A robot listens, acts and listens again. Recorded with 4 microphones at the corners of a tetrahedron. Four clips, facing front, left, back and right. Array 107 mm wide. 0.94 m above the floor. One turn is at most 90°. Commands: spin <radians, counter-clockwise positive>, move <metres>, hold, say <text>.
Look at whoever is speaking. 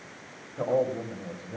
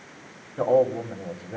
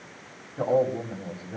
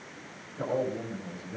spin 1.57
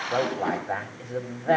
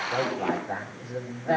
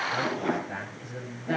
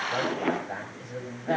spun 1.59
spin 0.17
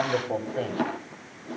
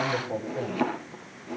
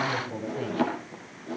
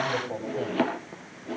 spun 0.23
say Facing the man speaking.